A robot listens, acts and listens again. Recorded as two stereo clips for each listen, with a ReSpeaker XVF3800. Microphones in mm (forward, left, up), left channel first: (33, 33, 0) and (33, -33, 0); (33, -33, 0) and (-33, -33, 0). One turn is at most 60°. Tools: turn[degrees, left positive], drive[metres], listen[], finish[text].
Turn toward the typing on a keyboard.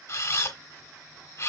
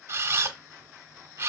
Action: listen[]
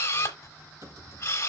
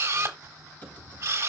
Thought: The typing on a keyboard: 65° right.
Action: turn[-60]
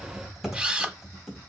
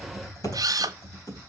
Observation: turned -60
Action: finish[Found it: typing on a keyboard, straight ahead, 2 to 4 m away.]